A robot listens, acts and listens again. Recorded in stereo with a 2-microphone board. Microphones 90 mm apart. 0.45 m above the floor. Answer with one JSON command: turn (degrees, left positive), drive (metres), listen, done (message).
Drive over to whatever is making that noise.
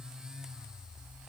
{"listen": true}
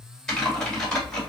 {"turn": 30}
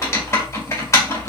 {"turn": 145}
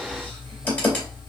{"turn": 15}
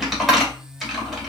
{"drive": 1.0}
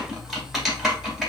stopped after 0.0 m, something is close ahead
{"done": "Blocked. The typing on a keyboard is further on, straight ahead."}